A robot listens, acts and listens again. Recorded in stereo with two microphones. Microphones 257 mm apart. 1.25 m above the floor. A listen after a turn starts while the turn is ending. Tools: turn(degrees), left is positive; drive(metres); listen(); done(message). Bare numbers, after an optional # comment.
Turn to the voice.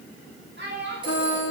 # The child speaking: about 45° right or 135° right.
turn(-45)
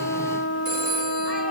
listen()
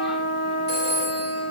listen()
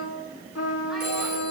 done("I heard a child speaking, but can't make it out now. It was about straight ahead or 90° right.")